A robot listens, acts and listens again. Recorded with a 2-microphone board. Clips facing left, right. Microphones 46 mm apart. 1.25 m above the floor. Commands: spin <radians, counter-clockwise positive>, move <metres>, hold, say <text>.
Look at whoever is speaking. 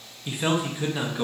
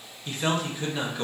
spin 0.52
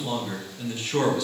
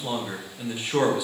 spin -0.26
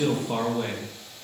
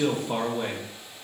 say Facing the man speaking, under 1 m away.